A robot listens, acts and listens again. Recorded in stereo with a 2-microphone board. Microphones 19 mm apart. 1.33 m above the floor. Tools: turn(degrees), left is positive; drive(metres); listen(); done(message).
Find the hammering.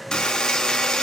listen()
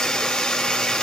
listen()
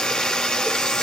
done("I can't make out hammering to turn to.")